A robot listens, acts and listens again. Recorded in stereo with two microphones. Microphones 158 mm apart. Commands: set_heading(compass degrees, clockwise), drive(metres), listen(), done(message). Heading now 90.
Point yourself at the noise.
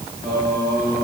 set_heading(60)
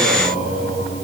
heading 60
set_heading(275)
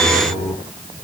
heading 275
done("Facing the singing.")